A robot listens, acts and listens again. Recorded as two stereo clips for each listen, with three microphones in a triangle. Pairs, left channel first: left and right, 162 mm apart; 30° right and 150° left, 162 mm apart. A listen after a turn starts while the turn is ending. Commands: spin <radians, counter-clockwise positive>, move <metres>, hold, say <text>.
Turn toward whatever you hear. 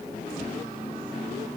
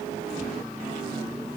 hold
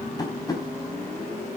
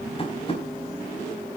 spin 0.44
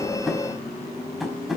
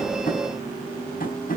say Facing the tapping, over 4 m away.